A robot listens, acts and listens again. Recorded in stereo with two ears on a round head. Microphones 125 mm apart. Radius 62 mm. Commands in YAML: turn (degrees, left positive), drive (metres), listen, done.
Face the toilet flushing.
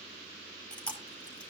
listen: true
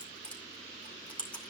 listen: true
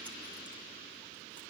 done: "I can't make out a toilet flushing, only chewing."